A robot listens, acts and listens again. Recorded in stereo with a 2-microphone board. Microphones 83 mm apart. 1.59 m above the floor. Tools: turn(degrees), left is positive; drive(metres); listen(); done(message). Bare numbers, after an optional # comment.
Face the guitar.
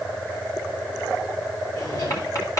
listen()
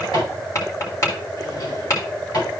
listen()
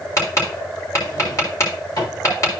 done("I can't make out a guitar to turn to.")